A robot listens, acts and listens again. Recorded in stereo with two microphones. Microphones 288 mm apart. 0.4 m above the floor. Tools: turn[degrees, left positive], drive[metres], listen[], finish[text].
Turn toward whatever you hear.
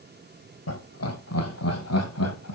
Thought: The laughter: about 60° left or 120° left.
Action: turn[60]
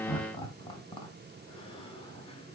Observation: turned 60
Thought: So it is at 15° left.
Action: turn[15]
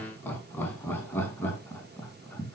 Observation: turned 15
Action: finish[Facing the laughter.]